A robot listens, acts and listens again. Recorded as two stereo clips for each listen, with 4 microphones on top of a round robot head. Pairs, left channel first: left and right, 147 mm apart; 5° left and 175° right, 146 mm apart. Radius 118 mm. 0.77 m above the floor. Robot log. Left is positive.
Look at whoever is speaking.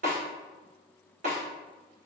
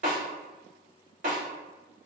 cmd idle
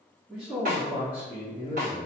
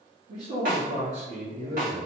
note: The man speaking: 145° right.
cmd yaw -145
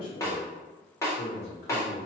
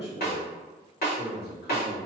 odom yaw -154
note: The man speaking is now 55° left.
cmd yaw +55
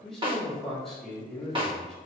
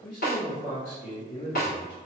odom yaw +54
end: Facing the man speaking, 1 to 2 m away.